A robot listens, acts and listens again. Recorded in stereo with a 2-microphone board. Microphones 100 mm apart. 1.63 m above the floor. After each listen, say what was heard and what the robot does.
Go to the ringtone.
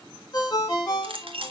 The ringtone: about 40° left or 140° left. Turn 40° left.
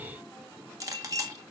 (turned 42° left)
Keep listening.
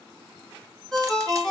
Drive 1.0 m forward.
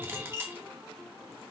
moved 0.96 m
Keep listening.
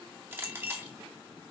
Keep listening.
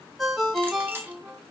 Drive 1.0 m forward.
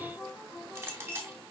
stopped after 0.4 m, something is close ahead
Keep listening.
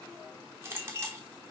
Keep listening.
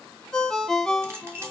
The ringtone is now 10° left. Turn 10° left.
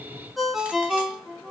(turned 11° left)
I am next to the ringtone.